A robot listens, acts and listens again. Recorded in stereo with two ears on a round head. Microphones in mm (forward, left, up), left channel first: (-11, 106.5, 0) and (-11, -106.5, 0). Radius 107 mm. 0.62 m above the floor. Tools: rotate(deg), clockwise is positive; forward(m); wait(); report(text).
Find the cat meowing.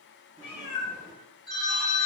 rotate(-75)
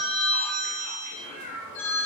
rotate(-60)
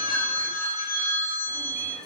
wait()
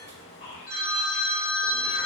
rotate(-45)
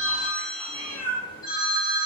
report("Found it: a cat meowing, straight ahead, 2 to 4 m away.")